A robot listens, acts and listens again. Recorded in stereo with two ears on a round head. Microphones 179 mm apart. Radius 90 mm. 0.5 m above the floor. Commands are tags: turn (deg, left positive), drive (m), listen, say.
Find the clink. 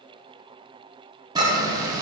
<turn deg="-25"/>
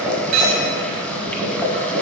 <turn deg="-130"/>
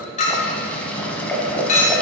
<turn deg="40"/>
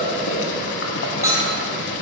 <turn deg="-15"/>
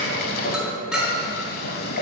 <say>Found it: a clink, straight ahead.</say>